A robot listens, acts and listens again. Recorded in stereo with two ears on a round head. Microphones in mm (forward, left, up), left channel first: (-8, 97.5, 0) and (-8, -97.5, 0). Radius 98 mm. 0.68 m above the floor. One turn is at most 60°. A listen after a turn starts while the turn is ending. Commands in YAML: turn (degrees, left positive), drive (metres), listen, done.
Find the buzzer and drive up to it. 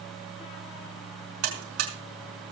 turn: -60
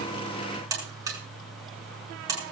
turn: -15
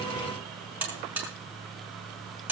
turn: -10
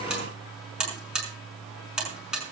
drive: 1.0
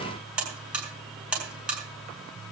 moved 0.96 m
drive: 1.0
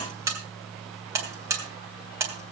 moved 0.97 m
turn: -15
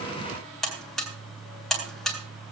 drive: 1.0
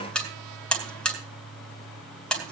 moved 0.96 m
drive: 1.0
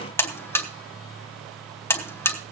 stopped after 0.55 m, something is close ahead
turn: 10
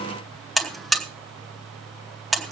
done: "Arrived at the buzzer, straight ahead."